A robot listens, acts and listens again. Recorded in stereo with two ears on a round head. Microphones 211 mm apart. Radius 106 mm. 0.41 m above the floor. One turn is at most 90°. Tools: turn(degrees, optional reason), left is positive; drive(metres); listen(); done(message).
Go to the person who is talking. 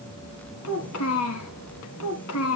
turn(degrees=65, reason="The child speaking: about 65° left or 115° left.")
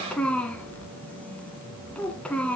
drive(metres=1.0)
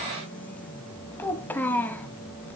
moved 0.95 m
turn(degrees=10, reason="The child speaking is now 10° left.")
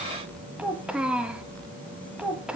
drive(metres=1.0)
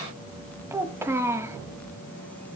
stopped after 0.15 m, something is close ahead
turn(degrees=-10, reason="The child speaking is now 10° right.")
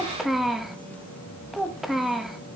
done("Arrived at the child speaking, straight ahead.")